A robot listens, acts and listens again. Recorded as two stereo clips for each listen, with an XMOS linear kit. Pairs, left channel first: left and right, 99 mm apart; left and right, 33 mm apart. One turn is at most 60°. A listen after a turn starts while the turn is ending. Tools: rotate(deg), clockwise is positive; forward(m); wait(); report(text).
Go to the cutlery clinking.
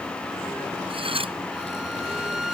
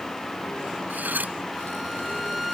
rotate(60)
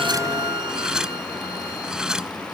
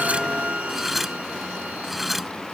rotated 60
rotate(10)
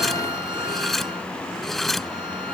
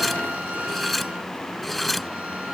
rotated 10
forward(1.0)
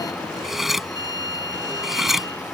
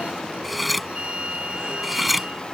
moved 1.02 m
forward(1.0)
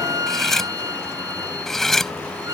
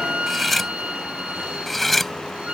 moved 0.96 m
forward(1.0)
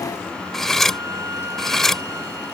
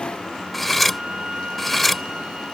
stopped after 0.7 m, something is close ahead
report("I am next to the cutlery clinking.")